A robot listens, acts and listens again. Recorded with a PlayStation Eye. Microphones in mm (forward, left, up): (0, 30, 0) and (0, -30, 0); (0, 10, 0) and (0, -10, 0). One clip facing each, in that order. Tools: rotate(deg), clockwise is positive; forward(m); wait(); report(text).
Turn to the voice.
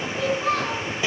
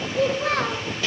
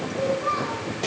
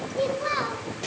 rotate(65)
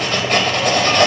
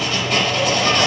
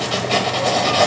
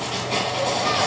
wait()
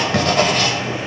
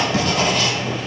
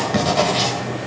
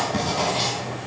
wait()
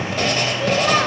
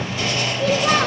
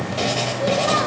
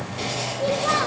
report("Facing the child speaking, 1 to 2 m away.")